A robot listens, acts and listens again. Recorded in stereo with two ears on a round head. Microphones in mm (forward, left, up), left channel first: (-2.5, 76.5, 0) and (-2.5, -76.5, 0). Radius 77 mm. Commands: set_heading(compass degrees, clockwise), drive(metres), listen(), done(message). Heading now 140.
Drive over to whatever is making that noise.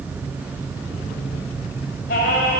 set_heading(80)
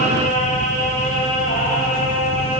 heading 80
set_heading(30)
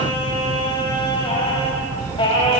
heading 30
set_heading(0)
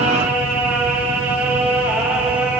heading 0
set_heading(10)
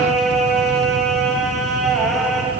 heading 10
drive(1.0)
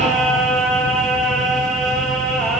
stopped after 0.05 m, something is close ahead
done("Something is in my way. I am facing the singing but have not reached it.")